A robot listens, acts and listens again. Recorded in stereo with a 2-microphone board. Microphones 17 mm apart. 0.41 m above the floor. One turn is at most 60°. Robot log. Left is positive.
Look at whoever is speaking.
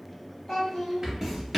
note: The child speaking: about 30° left or 150° left.
cmd yaw +30
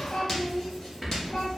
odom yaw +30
note: So it is at 115° left.
cmd yaw +60
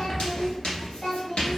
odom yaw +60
note: The child speaking is now 65° left.
cmd yaw +60
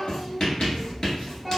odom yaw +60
cmd idle
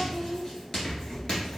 cmd idle
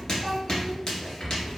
end: Facing where the child speaking came from. I can't hear it now.